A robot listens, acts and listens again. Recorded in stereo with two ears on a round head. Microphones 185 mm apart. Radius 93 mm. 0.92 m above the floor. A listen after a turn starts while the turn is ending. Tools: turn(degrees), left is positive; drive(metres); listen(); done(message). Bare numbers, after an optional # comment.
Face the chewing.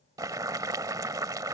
listen()
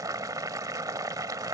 listen()
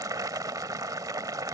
done("I can't make out chewing, only boiling.")